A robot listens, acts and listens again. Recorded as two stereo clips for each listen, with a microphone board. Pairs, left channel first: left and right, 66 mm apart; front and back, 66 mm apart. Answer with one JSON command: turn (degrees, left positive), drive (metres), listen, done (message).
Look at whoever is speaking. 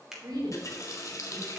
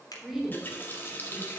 {"turn": -95}
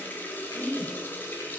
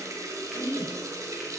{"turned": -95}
{"done": "Facing the woman speaking."}